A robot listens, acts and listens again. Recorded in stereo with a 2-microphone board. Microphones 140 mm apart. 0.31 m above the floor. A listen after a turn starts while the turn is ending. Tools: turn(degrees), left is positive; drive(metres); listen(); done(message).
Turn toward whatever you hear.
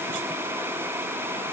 listen()
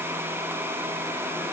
listen()
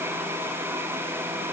done("I can't make out anything to turn to.")